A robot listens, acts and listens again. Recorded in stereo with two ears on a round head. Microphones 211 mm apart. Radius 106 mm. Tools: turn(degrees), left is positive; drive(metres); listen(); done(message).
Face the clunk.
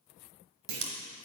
turn(degrees=-90)
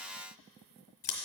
done("Facing where the clunk came from. I can't hear it now.")